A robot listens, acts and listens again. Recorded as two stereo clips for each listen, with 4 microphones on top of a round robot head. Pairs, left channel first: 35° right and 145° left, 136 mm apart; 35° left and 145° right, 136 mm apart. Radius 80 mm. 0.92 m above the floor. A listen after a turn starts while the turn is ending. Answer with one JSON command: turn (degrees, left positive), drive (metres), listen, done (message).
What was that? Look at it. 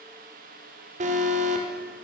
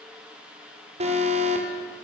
{"turn": 175}
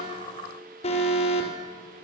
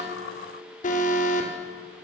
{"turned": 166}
{"turn": 10}
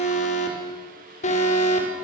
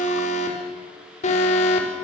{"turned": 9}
{"done": "Facing the alarm."}